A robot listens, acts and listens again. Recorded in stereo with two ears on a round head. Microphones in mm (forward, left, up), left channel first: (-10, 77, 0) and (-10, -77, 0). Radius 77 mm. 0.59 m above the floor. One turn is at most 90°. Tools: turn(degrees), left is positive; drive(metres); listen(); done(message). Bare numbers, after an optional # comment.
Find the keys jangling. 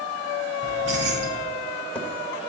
turn(-90)
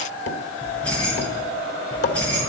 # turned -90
done("Facing the keys jangling.")